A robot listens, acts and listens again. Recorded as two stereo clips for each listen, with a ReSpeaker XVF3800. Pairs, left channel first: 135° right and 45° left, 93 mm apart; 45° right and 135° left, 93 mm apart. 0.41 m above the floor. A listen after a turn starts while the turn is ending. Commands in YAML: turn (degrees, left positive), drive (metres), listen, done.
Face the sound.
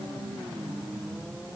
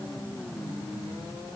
listen: true
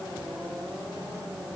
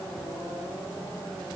listen: true
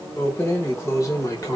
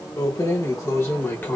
turn: -105
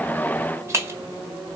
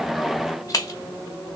done: "Found it: keys jangling, straight ahead, 1 to 2 m away."